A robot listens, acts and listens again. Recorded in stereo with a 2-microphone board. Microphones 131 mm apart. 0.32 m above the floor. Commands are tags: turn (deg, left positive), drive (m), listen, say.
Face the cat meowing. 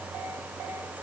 <listen/>
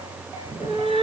<turn deg="-45"/>
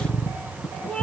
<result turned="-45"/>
<turn deg="10"/>
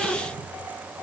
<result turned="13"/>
<listen/>
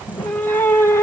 <turn deg="25"/>
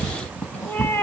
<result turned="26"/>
<turn deg="20"/>
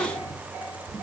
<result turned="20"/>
<listen/>
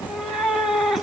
<say>Found it: a cat meowing, straight ahead, 1 to 2 m away.</say>